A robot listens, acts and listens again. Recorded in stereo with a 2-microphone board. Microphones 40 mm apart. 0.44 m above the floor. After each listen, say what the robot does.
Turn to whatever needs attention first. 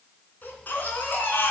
Turn 50° left.
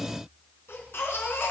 Turn 75° left.
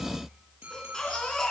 Turn 15° left.
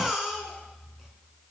Facing the baby crying.